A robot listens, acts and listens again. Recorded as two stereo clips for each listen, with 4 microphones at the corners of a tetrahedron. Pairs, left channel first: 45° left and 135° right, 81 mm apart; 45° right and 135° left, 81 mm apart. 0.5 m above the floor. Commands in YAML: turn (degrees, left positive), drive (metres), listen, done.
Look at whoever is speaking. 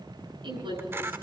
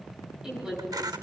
turn: -145
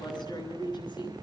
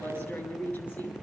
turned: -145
turn: 20
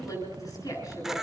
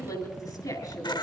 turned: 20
done: "Found it: a woman speaking, straight ahead."